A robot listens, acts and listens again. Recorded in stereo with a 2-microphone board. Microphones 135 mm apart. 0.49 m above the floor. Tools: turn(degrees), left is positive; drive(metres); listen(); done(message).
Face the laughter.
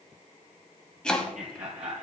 turn(degrees=-70)
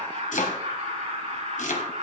turn(degrees=-50)
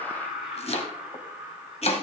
turn(degrees=-10)
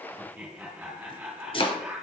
done("Found it: laughter, straight ahead.")